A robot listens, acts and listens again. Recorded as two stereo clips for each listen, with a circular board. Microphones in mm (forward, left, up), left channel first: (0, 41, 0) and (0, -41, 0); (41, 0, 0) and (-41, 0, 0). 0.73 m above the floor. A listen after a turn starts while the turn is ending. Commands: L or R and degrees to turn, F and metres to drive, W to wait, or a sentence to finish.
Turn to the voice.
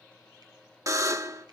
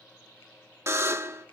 W
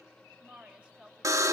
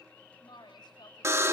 R15
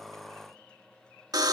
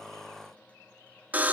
W
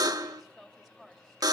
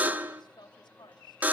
Facing the woman speaking.